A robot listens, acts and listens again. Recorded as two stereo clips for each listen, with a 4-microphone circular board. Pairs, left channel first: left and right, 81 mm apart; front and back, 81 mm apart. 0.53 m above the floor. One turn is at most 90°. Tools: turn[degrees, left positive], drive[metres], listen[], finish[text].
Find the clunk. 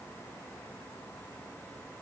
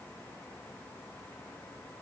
Action: listen[]
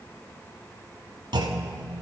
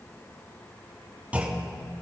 Thought: The clunk: 110° right.
Action: turn[-90]
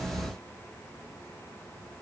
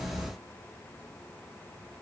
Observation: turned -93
Thought: Nothing new. It was at 15° right.
Action: turn[-15]
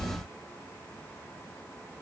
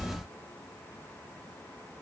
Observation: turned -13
Action: finish[I heard a clunk from this way, but can't make it out now.]